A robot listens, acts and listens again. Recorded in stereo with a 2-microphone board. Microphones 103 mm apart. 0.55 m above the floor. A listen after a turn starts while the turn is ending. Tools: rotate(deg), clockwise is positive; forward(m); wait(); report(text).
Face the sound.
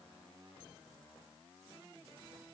wait()
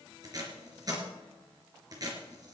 rotate(40)
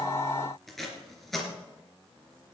report("Found it: tape being pulled, straight ahead, 2 to 4 m away.")